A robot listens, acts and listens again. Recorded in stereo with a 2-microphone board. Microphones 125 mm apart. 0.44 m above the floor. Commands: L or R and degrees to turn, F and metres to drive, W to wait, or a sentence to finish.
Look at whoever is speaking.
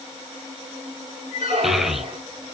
L30
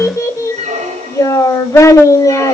L150
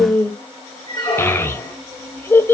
L20
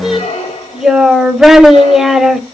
Found it: a child speaking, straight ahead, under 1 m away.